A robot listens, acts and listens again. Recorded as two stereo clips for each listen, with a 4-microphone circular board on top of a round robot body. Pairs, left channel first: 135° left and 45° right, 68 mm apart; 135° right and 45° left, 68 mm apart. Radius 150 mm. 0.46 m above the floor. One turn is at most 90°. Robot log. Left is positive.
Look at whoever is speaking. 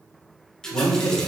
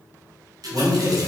note: The man speaking: 100° left.
cmd yaw +90
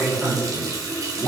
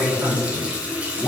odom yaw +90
end: Facing the man speaking.